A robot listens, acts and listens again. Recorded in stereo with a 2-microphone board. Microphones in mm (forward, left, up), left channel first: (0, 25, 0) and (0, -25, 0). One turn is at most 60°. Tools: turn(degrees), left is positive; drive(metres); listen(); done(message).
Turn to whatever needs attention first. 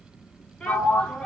turn(degrees=15)
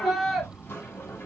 done("Facing the shout.")